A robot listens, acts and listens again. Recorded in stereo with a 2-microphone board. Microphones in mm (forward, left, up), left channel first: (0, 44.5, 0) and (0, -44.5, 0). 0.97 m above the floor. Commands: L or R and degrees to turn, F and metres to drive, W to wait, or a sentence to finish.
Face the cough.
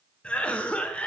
L30
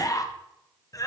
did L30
L135
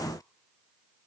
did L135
W
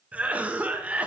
R20
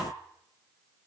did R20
W
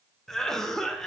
Facing the cough.